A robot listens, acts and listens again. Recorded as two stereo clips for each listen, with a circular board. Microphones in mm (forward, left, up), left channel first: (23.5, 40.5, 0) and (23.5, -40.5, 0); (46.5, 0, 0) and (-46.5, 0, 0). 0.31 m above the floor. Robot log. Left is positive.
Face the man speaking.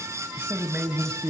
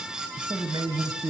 note: The man speaking: 155° right.
cmd yaw -155
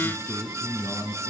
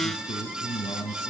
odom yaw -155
note: The man speaking is now 25° left.
cmd yaw +25
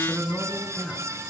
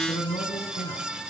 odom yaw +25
end: Facing the man speaking, 2 to 4 m away.